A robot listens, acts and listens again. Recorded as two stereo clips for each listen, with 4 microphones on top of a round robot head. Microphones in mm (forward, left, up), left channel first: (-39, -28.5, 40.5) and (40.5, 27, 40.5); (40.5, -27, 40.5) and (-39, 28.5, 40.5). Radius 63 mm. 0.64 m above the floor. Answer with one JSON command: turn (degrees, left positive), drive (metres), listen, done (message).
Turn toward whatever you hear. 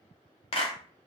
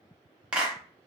{"turn": -135}
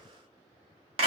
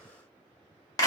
{"turn": 15}
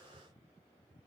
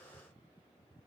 {"listen": true}
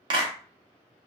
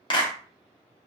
{"done": "Facing the clap."}